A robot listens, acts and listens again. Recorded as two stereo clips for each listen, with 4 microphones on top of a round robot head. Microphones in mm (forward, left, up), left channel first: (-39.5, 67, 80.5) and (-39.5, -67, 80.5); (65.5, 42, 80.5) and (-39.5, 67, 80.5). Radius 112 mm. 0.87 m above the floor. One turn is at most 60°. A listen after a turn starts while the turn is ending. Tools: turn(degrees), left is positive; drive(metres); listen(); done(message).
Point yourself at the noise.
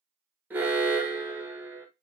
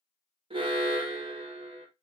turn(degrees=-60)
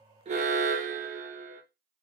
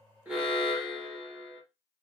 turn(degrees=-60)
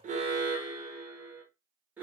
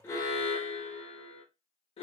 turn(degrees=-15)
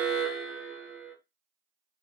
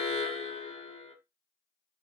done("Found it: an alarm, straight ahead.")